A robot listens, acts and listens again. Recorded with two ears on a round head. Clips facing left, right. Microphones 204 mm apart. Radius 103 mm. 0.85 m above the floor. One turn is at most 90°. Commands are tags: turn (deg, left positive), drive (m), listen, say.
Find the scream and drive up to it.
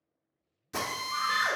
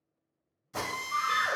<turn deg="-45"/>
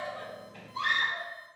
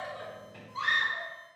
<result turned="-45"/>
<drive m="1.0"/>
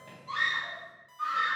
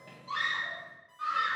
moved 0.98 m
<drive m="1.0"/>
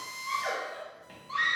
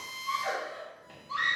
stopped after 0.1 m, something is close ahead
<say>I am next to the scream.</say>